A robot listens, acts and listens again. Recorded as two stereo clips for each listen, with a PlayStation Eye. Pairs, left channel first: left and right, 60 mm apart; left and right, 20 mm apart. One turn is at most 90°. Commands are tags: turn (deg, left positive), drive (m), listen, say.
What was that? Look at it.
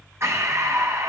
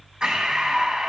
<turn deg="-50"/>
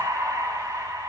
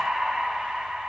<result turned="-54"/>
<turn deg="-75"/>
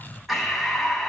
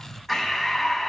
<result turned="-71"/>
<say>Found it: breathing, straight ahead.</say>